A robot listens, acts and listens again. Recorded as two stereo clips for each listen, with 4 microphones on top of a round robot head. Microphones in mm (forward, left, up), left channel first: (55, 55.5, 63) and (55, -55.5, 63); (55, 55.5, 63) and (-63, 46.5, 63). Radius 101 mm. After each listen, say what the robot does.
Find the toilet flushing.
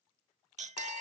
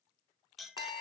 Keep listening.
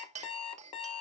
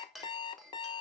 Keep listening.
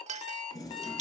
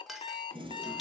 Turn 145° left.
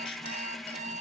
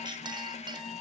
Facing the toilet flushing.